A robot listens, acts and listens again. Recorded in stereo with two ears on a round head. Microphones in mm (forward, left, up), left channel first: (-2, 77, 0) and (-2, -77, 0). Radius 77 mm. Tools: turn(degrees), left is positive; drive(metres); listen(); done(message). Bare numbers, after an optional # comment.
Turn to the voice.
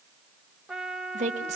# The woman speaking: about 45° right or 135° right.
turn(-45)
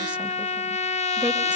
listen()
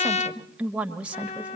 # So it is at 10° right.
turn(-10)
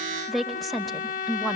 done("Found it: a woman speaking, straight ahead.")